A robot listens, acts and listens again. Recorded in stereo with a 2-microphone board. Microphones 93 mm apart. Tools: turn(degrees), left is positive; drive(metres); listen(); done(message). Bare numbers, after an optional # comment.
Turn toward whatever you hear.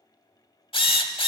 # The drill: about 70° left or 110° left.
turn(70)
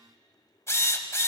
# So it is at 30° left.
turn(30)
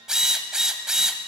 # The drill is now 10° right.
turn(-10)
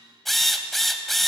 done("Facing the drill.")